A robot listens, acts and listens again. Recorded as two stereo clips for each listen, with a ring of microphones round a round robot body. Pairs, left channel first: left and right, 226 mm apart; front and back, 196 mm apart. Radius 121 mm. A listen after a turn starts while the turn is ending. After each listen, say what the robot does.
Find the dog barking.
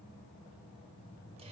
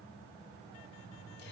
Keep listening.
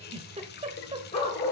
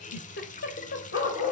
Turn 30° left.
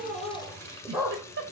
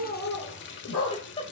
Facing the dog barking.